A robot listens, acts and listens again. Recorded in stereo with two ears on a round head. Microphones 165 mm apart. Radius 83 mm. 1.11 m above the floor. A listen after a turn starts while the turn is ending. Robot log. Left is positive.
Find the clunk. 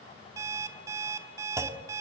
note: The clunk: about 20° right or 160° right.
cmd yaw -20
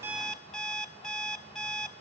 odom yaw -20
cmd idle
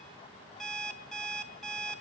end: I heard a clunk, but can't make it out now. It was about straight ahead or 140° right.